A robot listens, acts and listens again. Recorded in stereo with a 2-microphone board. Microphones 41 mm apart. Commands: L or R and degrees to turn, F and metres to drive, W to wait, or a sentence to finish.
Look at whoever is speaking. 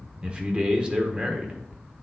R25
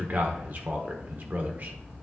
R125
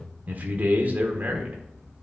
R45
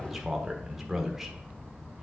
Found it: a man speaking, straight ahead.